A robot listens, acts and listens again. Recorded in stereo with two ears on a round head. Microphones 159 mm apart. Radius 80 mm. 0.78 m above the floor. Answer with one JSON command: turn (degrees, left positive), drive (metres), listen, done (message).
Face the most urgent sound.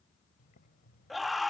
{"turn": 30}
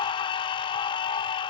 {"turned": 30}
{"turn": 150}
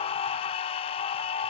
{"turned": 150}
{"turn": 35}
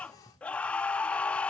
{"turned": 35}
{"turn": 10}
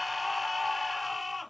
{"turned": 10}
{"done": "Found it: a scream, straight ahead."}